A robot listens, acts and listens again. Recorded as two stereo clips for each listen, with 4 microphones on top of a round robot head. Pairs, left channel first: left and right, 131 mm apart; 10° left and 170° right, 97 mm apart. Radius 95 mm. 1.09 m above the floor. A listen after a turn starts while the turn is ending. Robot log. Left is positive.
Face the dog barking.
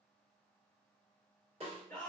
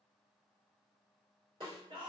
cmd idle
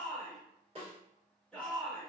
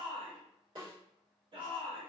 cmd idle
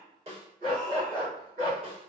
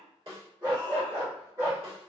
note: The dog barking: 105° right.
cmd yaw -105
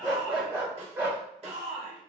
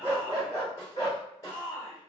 note: The dog barking is now 20° right.
cmd yaw -20
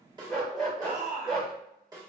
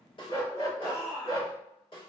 end: Facing the dog barking.